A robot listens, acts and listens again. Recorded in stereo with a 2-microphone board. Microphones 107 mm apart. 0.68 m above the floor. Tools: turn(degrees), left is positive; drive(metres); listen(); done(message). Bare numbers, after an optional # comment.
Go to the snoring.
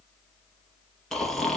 turn(30)
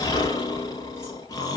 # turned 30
# So it is at 145° left.
turn(145)
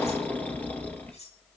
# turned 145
# The snoring is now 15° left.
turn(15)
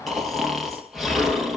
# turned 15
drive(1.0)
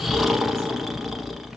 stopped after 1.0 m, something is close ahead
done("I am next to the snoring.")